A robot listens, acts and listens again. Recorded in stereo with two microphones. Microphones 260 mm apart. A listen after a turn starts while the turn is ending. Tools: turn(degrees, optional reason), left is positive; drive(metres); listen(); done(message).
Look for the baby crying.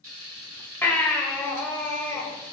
turn(degrees=30)
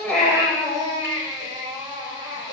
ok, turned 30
turn(degrees=-15, reason="So it is at 15° right.")
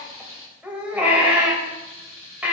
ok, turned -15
done("Facing the baby crying.")